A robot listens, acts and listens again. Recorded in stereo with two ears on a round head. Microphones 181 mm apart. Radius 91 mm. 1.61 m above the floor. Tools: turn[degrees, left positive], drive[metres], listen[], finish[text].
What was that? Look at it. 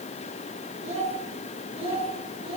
Thought: The child speaking: about 25° right or 155° right.
Action: turn[-25]
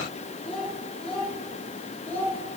Thought: So it is at 10° left.
Action: turn[10]
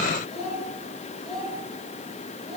Action: finish[Facing the child speaking, over 4 m away.]